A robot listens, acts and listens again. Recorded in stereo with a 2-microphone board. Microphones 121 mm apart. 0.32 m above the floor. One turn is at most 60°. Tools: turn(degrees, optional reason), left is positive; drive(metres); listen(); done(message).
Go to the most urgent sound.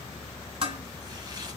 listen()
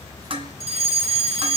turn(degrees=-60, reason="The fire alarm: about 60° right or 120° right.")
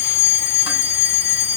turn(degrees=-25, reason="So it is at 25° right.")
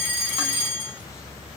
turn(degrees=-15, reason="The fire alarm is now 15° right.")
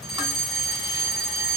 drive(metres=1.0)
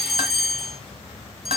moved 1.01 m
drive(metres=1.0)
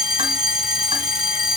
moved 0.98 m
drive(metres=1.0)
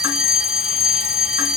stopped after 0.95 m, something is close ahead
turn(degrees=-10, reason="The fire alarm is now 10° right.")
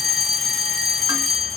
done("I am next to the fire alarm.")